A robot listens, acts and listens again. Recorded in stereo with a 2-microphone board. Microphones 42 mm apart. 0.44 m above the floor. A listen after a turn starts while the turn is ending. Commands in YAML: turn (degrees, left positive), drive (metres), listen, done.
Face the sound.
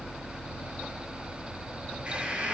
turn: -30
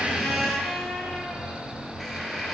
done: "Facing the squeak."